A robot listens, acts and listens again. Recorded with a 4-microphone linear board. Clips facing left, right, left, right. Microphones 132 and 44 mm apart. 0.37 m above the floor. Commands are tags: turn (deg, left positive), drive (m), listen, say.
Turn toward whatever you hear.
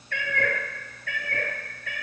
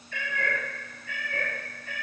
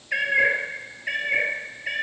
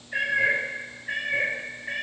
<turn deg="90"/>
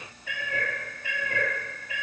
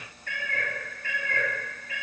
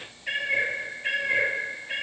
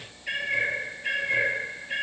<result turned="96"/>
<turn deg="20"/>
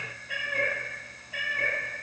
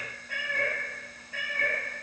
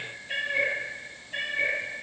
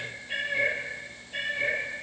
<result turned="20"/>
<turn deg="15"/>
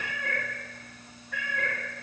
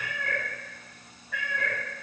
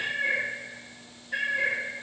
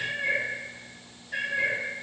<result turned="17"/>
<say>Found it: a cat meowing, straight ahead, 2 to 4 m away.</say>